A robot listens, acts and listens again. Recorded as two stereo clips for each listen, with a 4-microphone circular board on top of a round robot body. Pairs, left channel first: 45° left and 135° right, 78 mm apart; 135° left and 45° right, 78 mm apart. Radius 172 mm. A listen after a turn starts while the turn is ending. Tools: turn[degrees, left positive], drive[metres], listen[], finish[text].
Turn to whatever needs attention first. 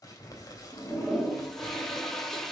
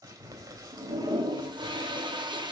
Action: listen[]
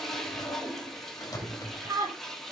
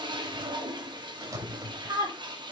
Thought: The scream: 80° right.
Action: turn[-80]
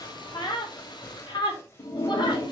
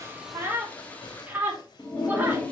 Thought: The scream is now 25° left.
Action: turn[25]
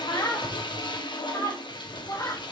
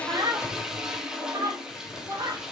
Action: finish[Facing the scream, over 4 m away.]